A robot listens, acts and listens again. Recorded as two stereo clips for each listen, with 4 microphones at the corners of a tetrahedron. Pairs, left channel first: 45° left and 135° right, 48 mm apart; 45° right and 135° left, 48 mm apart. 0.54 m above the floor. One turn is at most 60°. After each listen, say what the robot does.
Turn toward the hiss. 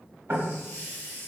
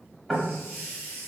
Facing the hiss, 1 to 2 m away.